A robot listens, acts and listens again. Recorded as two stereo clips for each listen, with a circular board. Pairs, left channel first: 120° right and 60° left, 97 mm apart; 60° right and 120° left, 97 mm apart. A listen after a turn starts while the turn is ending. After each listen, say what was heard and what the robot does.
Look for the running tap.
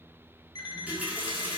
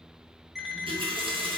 The running tap: 135° left. Turn 135° left.
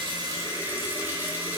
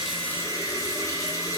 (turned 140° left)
The running tap is now 10° right. Turn 10° right.
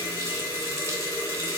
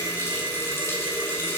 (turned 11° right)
Found it: a running tap, straight ahead.